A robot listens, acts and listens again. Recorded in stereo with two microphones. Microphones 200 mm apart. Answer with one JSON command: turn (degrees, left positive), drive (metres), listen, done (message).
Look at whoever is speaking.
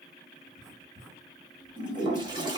{"listen": true}
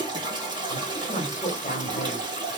{"turn": 35}
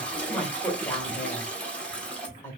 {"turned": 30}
{"turn": 10}
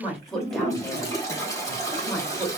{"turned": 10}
{"done": "Found it: a woman speaking, straight ahead, 1 to 2 m away."}